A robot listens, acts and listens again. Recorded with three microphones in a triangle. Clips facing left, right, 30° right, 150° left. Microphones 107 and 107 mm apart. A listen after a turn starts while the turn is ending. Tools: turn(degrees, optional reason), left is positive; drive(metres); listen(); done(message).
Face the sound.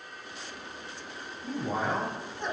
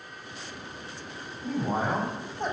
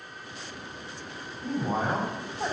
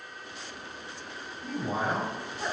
turn(degrees=-65, reason="The man speaking: 65° right.")
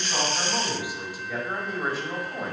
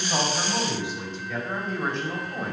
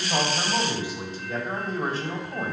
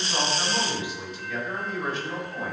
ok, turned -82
done("Found it: a man speaking, straight ahead, 1 to 2 m away.")